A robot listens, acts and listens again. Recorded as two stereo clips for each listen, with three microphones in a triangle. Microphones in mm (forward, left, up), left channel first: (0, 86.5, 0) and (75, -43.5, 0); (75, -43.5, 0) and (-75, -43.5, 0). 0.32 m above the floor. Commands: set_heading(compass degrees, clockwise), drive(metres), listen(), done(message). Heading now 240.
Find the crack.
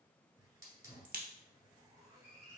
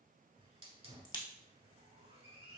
set_heading(305)
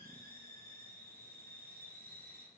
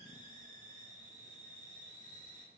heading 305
done("I heard a crack from this way, but can't make it out now.")